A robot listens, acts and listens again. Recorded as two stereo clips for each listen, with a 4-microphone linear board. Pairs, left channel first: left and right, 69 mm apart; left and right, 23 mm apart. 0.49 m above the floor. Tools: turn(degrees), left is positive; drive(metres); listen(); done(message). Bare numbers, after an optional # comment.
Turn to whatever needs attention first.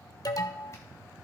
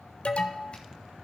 # The alarm: about 65° left or 115° left.
turn(65)
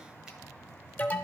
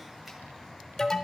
# So it is at 25° left.
turn(25)
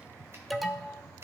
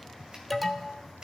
done("Facing the alarm, under 1 m away.")